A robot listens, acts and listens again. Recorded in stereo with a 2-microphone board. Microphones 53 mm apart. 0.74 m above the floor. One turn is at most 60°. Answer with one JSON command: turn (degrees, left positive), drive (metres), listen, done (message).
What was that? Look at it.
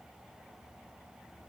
{"listen": true}
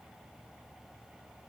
{"listen": true}
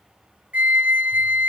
{"turn": -30}
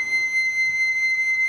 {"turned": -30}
{"done": "Facing the flute."}